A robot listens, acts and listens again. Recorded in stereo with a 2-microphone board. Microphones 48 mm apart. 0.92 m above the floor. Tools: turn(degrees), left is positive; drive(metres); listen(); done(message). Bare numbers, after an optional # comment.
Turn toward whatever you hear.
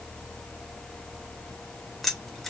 turn(30)
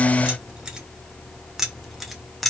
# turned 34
turn(30)
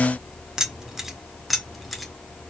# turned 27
turn(30)
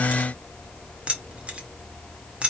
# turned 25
# So it is at 25° right.
turn(-25)
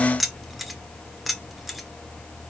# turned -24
done("Found it: keys jangling, straight ahead.")